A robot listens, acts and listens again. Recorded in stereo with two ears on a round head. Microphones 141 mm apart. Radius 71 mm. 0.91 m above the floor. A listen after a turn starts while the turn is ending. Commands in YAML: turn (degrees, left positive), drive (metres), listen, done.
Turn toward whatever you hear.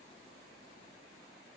listen: true
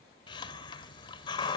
turn: 30
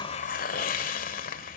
turn: 120
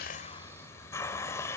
turn: 20
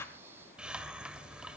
done: "Found it: a hiss, straight ahead."